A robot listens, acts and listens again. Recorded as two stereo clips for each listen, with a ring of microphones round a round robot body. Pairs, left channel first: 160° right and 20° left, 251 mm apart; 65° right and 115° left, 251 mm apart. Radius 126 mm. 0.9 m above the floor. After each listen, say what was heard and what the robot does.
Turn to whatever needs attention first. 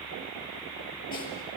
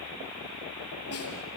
Keep listening.
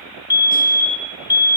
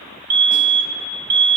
The fire alarm: 125° left. Turn 125° left.
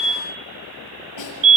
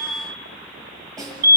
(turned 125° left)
The fire alarm is now 55° left. Turn 55° left.
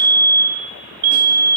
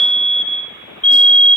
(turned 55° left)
The fire alarm is now 20° left. Turn 20° left.
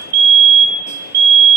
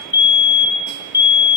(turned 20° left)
Found it: a fire alarm, straight ahead, over 4 m away.